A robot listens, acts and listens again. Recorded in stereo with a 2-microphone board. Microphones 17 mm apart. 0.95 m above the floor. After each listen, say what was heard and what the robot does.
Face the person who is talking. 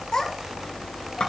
The child speaking: about 45° left or 135° left. Turn 45° left.
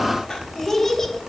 So it is at 20° left. Turn 20° left.
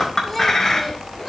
Keep listening.
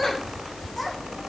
The child speaking is now 10° left. Turn 10° left.
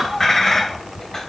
Facing the child speaking, over 4 m away.